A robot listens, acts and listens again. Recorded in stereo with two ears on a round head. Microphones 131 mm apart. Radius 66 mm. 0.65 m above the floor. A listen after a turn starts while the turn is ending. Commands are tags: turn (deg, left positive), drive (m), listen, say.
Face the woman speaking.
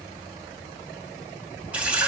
<listen/>
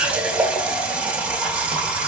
<listen/>
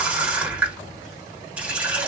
<say>I can't make out a woman speaking, only a running tap.</say>